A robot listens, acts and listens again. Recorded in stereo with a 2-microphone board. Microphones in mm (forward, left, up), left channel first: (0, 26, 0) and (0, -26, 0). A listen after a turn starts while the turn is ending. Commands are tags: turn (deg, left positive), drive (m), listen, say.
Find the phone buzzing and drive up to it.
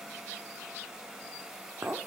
<listen/>
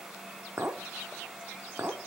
<listen/>
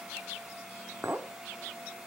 <say>I can't make out a phone buzzing to turn to.</say>